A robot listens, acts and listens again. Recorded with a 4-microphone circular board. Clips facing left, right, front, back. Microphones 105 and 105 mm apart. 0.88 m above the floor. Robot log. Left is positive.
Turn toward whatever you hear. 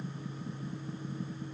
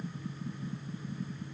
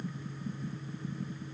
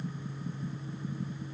cmd idle
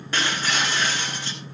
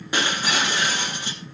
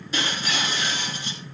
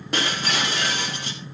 note: The breaking glass: 165° right.
cmd yaw -165
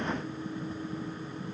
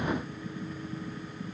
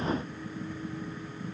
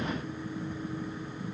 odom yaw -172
note: Nothing new. It was at 10° left.
cmd yaw +10
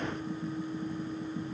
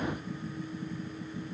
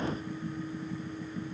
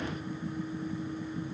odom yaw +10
end: Facing where the breaking glass came from. I can't hear it now.